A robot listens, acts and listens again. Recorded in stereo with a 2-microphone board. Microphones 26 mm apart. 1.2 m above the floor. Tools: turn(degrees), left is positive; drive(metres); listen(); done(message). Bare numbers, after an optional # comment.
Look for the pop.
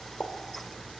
turn(90)
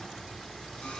done("Facing where the pop came from. I can't hear it now.")